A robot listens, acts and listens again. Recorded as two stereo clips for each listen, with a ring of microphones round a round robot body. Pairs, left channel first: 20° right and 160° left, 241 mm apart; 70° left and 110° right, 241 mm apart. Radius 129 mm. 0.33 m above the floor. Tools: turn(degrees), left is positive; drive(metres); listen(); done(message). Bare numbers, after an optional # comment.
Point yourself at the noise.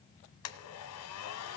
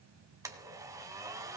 # The blender: 35° right.
turn(-35)
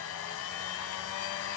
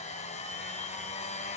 done("Facing the blender, 1 to 2 m away.")